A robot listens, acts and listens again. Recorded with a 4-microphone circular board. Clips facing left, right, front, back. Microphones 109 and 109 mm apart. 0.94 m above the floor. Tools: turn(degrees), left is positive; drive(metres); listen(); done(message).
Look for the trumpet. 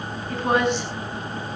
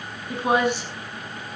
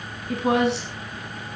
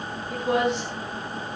listen()
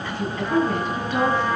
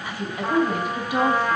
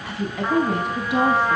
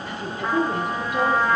turn(degrees=-85)
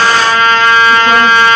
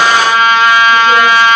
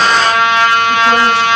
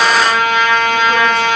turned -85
turn(degrees=-15)
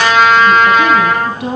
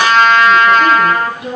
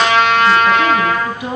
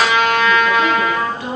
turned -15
done("Facing the trumpet, over 4 m away.")